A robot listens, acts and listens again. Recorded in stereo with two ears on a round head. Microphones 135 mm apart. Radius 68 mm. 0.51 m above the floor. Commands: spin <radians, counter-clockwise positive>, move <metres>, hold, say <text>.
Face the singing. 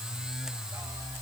hold
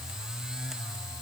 hold
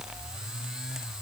say I can't make out singing to turn to.